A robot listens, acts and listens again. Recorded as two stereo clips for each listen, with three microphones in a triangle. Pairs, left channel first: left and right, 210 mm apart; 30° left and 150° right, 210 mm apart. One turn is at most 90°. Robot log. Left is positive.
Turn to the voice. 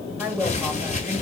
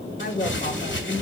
note: The woman speaking: 20° right.
cmd yaw -20
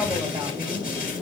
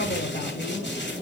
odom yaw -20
note: The woman speaking is now 20° right.
cmd yaw -20
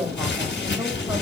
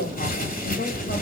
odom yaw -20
note: The woman speaking is now 10° right.
cmd yaw -10
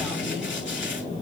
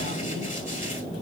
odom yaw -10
cmd idle
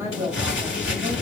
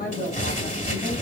note: The woman speaking is now 15° right.
cmd yaw -15
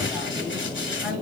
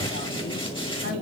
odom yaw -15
end: Facing the woman speaking, 2 to 4 m away.